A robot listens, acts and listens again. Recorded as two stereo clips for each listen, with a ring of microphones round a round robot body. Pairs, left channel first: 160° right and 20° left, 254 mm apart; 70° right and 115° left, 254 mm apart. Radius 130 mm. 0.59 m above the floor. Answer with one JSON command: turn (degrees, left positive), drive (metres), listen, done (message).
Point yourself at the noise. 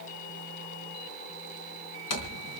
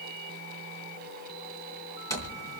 {"turn": -145}
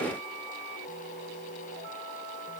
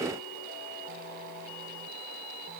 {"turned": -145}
{"done": "Facing where the door slam came from. I can't hear it now."}